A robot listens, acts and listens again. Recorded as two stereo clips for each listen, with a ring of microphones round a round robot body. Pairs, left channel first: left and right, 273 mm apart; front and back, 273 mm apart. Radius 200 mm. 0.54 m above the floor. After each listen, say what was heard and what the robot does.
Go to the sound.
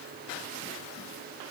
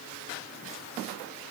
Keep listening.
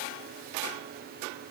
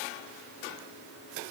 Keep listening.
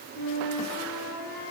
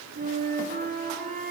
The flute: 120° left. Turn 120° left.
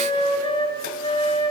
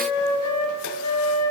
The flute is now 20° left. Turn 20° left.
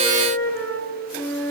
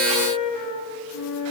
Drive 1.0 m forward.
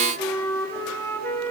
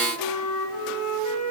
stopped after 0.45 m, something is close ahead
The flute is now 10° left. Turn 10° left.
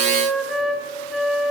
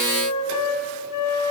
Blocked. The flute is further on, straight ahead.